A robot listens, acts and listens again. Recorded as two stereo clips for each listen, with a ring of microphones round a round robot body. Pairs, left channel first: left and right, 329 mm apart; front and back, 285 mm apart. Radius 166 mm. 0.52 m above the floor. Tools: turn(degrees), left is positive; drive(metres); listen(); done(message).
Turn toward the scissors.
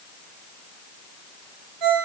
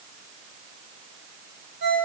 listen()
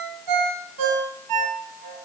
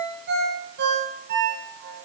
listen()
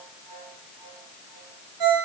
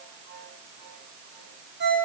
done("I can't make out scissors to turn to.")